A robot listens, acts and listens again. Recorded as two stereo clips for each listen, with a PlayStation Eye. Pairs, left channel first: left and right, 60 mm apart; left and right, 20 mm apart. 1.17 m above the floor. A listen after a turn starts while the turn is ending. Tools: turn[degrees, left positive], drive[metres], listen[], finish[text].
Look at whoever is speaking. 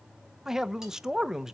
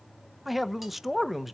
Action: turn[-30]
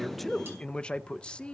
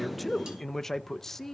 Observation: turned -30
Thought: So it is at 20° left.
Action: turn[20]
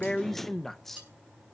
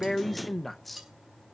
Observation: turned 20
Action: finish[Facing the man speaking.]